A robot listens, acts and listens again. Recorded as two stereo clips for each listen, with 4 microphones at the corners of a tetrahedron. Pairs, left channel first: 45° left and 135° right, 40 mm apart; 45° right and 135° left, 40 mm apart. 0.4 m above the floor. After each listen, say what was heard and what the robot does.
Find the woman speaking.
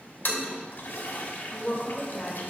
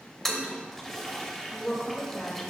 The woman speaking: 35° right. Turn 35° right.
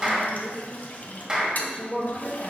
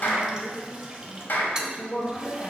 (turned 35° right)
The woman speaking is now 60° right. Turn 60° right.
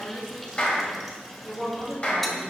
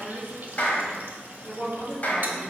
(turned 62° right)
The woman speaking is now 15° right. Turn 15° right.
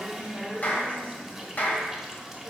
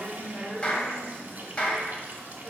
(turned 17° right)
Facing the woman speaking, 2 to 4 m away.